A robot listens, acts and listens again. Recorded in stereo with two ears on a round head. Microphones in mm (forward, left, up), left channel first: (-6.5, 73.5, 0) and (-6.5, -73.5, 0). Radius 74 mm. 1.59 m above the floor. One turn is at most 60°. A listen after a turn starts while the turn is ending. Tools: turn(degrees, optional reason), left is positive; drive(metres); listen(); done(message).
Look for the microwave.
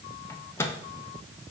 turn(degrees=30)
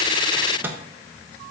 turn(degrees=-15, reason="So it is at 15° right.")
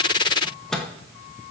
done("Facing the microwave, 1 to 2 m away.")